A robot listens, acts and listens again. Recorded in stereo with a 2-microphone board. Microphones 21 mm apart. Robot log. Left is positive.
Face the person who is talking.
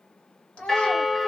note: The child speaking: about 75° left or 105° left.
cmd yaw +75
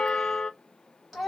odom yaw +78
end: Found it: a child speaking, straight ahead.